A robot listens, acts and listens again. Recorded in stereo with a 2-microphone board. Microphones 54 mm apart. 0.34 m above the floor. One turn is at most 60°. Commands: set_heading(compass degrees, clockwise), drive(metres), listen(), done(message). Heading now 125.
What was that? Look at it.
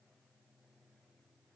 listen()
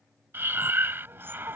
set_heading(170)
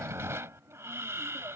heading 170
set_heading(230)
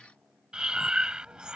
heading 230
set_heading(250)
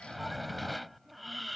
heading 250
done("Found it: breathing, straight ahead.")